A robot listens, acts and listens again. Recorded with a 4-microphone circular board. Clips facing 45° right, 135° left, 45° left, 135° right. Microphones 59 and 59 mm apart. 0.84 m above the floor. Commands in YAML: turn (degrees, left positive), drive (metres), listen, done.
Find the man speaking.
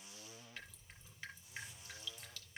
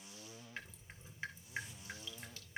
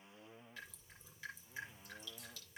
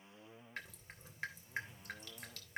listen: true
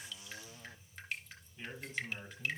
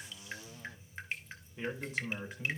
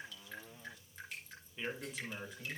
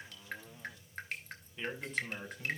turn: 135
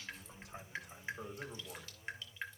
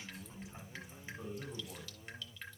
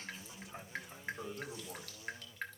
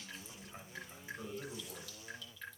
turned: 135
turn: -35
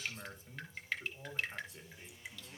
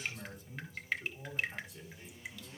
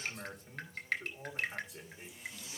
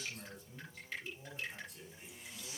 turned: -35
turn: 10
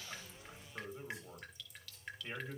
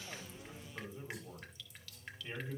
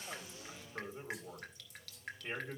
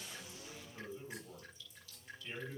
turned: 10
done: "Facing the man speaking."